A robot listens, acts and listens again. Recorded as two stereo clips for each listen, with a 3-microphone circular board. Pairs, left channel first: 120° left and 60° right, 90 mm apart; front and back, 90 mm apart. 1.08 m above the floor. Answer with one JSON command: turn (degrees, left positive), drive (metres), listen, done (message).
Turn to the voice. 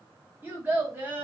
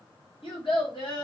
{"turn": 10}
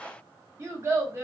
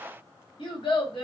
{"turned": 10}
{"done": "Facing the child speaking, 1 to 2 m away."}